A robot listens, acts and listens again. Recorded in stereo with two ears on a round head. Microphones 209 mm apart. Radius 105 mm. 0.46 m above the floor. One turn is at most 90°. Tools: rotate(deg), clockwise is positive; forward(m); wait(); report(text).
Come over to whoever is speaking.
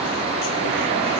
wait()
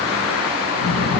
rotate(-65)
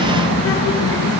rotate(-50)
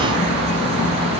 rotate(-20)
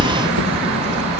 forward(1.0)
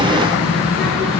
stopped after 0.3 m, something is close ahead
report("Blocked. The child speaking is further on, straight ahead.")